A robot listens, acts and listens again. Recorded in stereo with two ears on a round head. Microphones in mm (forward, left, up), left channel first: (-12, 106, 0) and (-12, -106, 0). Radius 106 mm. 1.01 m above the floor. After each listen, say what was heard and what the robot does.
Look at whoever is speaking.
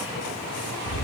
Keep listening.
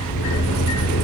Keep listening.
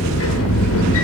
I can't make out anyone speaking to turn to.